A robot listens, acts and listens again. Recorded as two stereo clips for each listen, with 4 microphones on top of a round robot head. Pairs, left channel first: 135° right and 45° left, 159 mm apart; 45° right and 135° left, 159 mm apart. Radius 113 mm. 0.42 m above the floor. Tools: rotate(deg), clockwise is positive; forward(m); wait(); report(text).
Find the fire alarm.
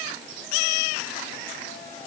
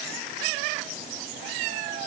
wait()
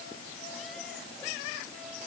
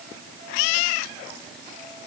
wait()
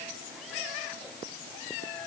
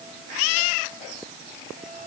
report("I can't make out a fire alarm.")